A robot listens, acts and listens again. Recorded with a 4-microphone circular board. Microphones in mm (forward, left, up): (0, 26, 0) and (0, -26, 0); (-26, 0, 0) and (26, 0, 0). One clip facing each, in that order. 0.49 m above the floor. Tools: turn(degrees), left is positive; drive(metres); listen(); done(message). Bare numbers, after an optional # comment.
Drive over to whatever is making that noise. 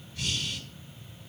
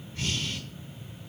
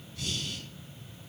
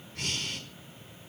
# The breathing: 35° right.
turn(-35)
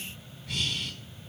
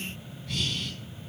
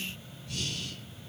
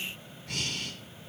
drive(1.0)
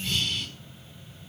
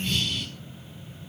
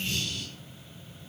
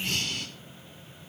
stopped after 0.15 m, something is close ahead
done("Blocked. The breathing is further on, straight ahead.")